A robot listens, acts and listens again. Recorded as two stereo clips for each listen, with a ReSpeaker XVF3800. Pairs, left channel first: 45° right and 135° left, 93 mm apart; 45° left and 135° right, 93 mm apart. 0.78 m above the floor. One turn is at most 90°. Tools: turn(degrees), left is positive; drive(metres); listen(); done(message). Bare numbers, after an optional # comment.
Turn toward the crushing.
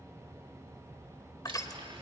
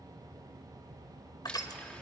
done("Facing the crushing.")